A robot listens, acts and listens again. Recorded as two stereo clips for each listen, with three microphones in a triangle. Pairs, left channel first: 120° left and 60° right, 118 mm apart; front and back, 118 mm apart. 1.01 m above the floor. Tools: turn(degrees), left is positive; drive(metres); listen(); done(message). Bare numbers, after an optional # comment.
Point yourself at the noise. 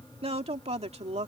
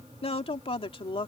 # The woman speaking: 40° right.
turn(-40)
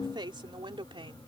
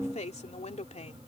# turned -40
# The woman speaking is now 15° right.
turn(-15)
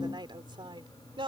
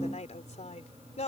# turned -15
# The woman speaking is now 15° right.
turn(-15)
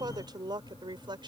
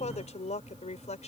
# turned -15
# The woman speaking is now 10° right.
turn(-10)
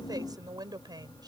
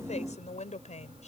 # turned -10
done("Facing the woman speaking.")